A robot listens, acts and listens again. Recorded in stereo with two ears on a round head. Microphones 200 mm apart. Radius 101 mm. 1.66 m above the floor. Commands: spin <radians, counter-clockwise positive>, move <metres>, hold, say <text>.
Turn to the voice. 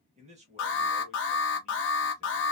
spin -0.52
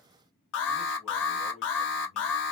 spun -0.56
hold
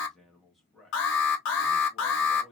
say Facing the man speaking, 1 to 2 m away.